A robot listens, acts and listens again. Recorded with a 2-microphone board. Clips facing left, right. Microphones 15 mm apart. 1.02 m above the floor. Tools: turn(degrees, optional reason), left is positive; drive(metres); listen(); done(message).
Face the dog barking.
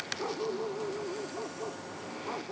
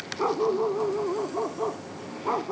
turn(degrees=-75, reason="The dog barking: about 75° right or 105° right.")
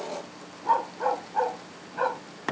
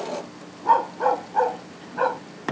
turn(degrees=-10, reason="So it is at 10° right.")
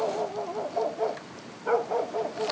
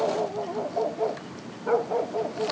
turn(degrees=20, reason="The dog barking is now 20° left.")
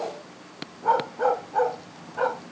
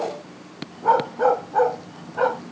turn(degrees=-10, reason="The dog barking is now 10° right.")
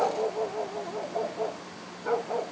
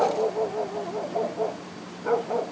done("Facing the dog barking.")